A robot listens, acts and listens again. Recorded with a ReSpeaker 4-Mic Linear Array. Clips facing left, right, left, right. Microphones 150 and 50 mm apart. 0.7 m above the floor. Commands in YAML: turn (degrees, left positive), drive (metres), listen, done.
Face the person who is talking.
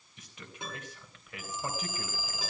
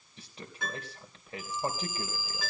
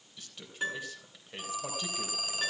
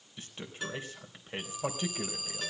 turn: -30
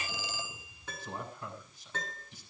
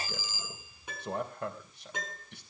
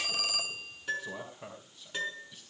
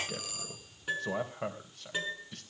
turn: -115
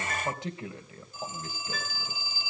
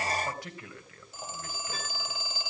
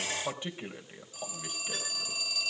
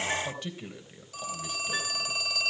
turn: 20
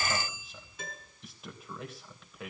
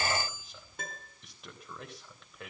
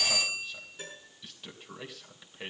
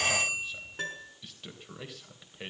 done: "Facing the man speaking."